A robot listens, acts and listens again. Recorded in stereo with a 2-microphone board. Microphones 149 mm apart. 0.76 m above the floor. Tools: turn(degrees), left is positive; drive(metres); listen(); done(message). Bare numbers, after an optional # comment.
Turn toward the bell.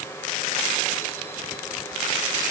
listen()
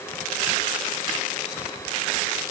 listen()
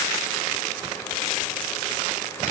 done("I can't make out a bell.")